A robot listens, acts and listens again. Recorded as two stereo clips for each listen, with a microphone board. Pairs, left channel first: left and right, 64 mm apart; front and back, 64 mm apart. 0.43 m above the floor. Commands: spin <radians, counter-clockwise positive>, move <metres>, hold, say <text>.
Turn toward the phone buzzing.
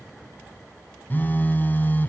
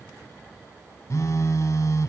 spin 0.52
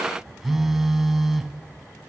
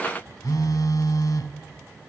say Facing the phone buzzing, 1 to 2 m away.